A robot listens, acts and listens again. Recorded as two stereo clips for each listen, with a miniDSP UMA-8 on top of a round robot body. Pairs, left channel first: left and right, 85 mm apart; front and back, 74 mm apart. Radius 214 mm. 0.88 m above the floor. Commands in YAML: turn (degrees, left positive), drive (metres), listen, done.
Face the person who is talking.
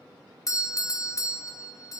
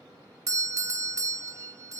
listen: true
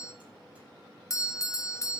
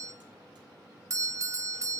listen: true
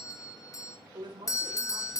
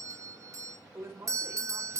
turn: -125
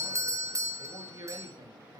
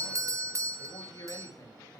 turn: -50
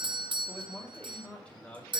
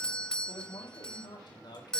turn: 15
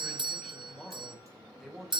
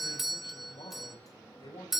done: "Found it: a man speaking, straight ahead, over 4 m away."